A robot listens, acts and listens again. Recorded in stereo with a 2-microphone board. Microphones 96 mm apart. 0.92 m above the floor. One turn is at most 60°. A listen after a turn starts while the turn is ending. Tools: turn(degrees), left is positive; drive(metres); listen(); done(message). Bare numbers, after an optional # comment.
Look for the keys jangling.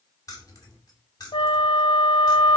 # The keys jangling: about 45° left or 135° left.
turn(45)
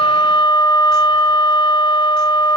listen()
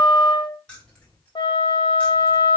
# So it is at 10° left.
turn(10)
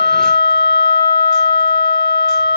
listen()
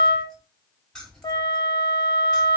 done("Facing the keys jangling, over 4 m away.")